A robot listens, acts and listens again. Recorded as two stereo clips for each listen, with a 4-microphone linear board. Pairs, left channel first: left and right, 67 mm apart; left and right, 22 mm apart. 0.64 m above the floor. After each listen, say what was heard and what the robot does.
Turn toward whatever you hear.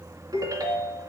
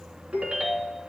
The ringtone: about 65° right or 115° right. Turn 65° right.
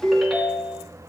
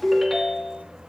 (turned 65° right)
Facing the ringtone.